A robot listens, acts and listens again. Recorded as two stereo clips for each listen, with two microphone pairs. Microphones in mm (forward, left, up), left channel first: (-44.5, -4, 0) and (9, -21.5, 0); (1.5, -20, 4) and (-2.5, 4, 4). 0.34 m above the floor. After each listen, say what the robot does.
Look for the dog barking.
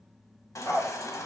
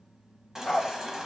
Turn 170° right.
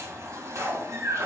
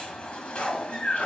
Turn 60° right.
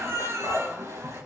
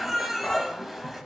Keep listening.
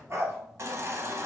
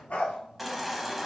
Turn 65° right.
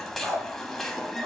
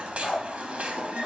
Turn 15° right.
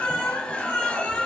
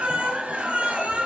Keep listening.
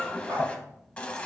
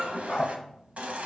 Found it: a dog barking, straight ahead, 2 to 4 m away.